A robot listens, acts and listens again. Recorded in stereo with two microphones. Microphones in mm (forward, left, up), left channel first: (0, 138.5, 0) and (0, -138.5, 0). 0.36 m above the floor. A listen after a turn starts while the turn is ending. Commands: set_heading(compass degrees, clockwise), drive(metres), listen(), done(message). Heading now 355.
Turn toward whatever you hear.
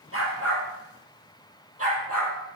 set_heading(50)
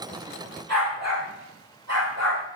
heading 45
set_heading(115)
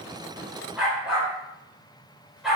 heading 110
done("Facing the dog barking.")